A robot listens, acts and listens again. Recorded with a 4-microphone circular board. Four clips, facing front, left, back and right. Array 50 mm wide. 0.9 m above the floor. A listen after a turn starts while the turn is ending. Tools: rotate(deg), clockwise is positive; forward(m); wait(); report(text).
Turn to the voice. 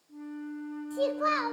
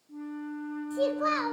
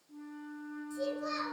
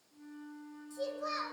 rotate(-40)
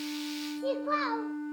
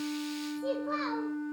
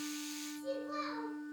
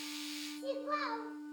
report("Found it: a child speaking, straight ahead.")